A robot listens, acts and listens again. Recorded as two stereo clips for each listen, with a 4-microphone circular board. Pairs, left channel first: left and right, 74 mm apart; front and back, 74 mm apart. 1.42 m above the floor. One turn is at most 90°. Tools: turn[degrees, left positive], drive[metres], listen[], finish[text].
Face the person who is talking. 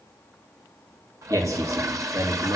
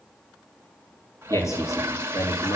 Thought: The man speaking: 45° right.
Action: turn[-45]
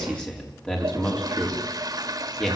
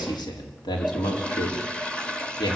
Thought: The man speaking is now 15° left.
Action: turn[15]
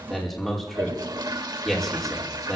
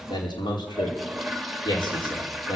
Action: finish[Found it: a man speaking, straight ahead, over 4 m away.]